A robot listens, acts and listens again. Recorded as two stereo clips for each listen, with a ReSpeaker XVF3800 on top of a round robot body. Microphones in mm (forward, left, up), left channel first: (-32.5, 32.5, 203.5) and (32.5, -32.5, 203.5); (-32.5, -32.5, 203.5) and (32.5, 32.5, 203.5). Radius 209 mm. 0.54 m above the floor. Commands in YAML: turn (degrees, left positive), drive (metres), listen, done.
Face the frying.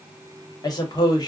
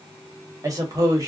listen: true
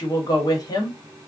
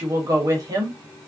listen: true
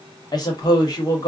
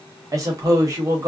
done: "I can't make out frying, only a woman speaking."